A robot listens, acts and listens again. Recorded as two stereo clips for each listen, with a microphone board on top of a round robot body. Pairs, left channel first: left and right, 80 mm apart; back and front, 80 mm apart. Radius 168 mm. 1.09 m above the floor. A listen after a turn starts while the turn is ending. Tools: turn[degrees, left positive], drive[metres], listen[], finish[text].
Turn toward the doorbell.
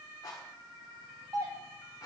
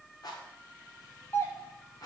Thought: The doorbell: 125° right.
Action: turn[-125]
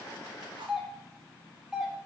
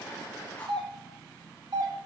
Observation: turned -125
Thought: The doorbell is now 10° right.
Action: turn[-10]
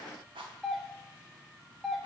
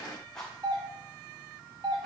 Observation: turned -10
Action: finish[Facing the doorbell, 2 to 4 m away.]